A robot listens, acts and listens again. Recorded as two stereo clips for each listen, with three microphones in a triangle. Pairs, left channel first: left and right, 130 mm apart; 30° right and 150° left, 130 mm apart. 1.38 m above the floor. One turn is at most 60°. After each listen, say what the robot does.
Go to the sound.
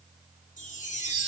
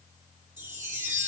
Turn 60° left.
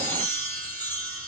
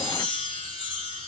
Turn 15° left.
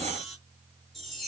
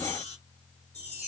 Drive 1.0 m forward.
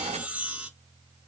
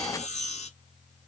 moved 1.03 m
Turn 10° right.
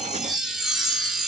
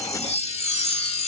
Drive 1.0 m forward.
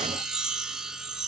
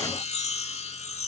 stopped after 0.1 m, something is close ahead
Arrived at the chime, straight ahead.